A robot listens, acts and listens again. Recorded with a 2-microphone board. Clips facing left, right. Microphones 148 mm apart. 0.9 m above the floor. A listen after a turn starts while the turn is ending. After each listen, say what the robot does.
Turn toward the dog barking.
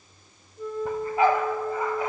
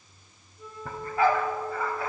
Turn 20° left.
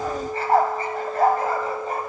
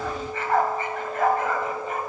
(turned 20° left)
Turn 140° left.
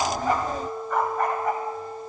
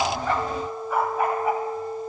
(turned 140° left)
Found it: a dog barking, straight ahead, 2 to 4 m away.